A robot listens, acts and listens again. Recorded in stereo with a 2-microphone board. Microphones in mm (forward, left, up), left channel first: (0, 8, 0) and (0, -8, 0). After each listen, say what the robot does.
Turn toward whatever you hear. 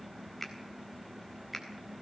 Turn 30° left.
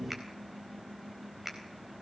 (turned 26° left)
Turn 15° right.
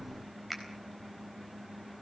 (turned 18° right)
Found it: a finger snap, straight ahead.